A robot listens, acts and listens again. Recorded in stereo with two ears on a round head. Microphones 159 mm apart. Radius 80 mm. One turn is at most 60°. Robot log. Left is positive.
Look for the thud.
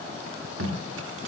cmd idle
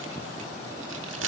cmd idle
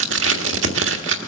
end: I can't make out a thud to turn to.